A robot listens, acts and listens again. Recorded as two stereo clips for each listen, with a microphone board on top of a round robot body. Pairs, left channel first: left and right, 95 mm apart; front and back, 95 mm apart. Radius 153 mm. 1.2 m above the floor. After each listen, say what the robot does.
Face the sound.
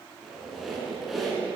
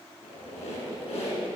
Found it: a squeak, straight ahead.